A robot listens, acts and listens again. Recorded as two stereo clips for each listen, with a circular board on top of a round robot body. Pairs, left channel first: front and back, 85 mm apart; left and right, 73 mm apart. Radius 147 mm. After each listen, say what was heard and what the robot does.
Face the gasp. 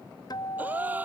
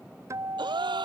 The gasp: 110° right. Turn 110° right.
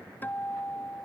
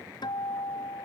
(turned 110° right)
Facing where the gasp came from. I can't hear it now.